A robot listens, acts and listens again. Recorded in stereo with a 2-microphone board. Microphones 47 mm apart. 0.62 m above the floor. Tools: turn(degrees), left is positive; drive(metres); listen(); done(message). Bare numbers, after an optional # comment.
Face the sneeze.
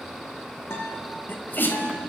# The sneeze: about 50° left or 130° left.
turn(50)
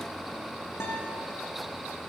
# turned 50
listen()
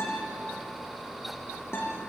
done("I heard a sneeze, but can't make it out now. It was about straight ahead or 80° left.")